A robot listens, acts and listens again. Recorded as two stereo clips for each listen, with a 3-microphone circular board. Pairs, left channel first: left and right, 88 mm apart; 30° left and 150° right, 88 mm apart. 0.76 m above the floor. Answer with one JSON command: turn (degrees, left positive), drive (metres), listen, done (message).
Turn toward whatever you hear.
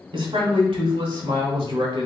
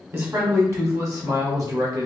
{"turn": -105}
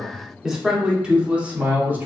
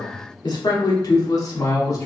{"turn": -25}
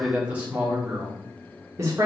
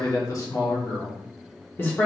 {"turn": -35}
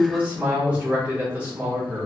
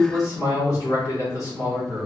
{"turn": -15}
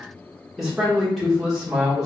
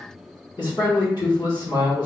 {"done": "Facing the man speaking."}